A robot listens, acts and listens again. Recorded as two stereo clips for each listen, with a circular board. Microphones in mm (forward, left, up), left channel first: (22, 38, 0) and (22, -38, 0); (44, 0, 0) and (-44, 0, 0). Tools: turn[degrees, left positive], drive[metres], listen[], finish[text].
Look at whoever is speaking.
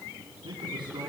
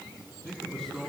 Thought: The man speaking: 85° right.
Action: turn[-85]
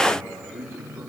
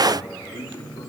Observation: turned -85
Thought: The man speaking is now 30° right.
Action: turn[-30]
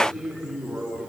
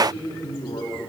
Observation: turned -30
Thought: The man speaking is now 10° right.
Action: turn[-10]
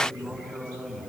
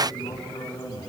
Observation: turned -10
Action: finish[Facing the man speaking, over 4 m away.]